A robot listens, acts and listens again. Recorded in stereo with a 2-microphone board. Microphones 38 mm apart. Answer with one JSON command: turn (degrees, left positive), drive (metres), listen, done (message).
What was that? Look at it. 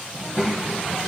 {"turn": -30}
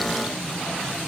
{"turn": 30}
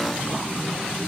{"turn": -40}
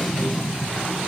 {"done": "Facing the child speaking, 2 to 4 m away."}